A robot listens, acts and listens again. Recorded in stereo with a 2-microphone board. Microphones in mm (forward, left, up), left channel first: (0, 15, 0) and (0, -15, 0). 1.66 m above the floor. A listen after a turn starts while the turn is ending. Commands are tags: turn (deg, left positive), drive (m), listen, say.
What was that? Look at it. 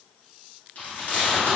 <turn deg="65"/>
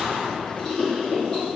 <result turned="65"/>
<turn deg="25"/>
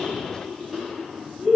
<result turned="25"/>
<say>Facing the chewing.</say>